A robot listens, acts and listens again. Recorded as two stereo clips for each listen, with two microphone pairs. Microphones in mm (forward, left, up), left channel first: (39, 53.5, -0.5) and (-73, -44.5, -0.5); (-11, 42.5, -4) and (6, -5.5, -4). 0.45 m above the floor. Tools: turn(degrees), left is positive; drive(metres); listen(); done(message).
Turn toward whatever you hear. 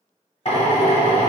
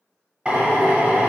done("Facing the drill.")